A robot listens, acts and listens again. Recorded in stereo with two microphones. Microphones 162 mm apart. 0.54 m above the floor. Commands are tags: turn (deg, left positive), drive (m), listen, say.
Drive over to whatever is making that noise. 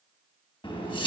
<turn deg="30"/>
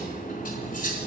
<turn deg="120"/>
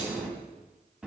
<drive m="1.0"/>
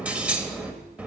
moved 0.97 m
<turn deg="-10"/>
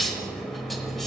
<drive m="1.0"/>
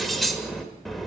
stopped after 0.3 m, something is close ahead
<say>I am next to the cutlery clinking.</say>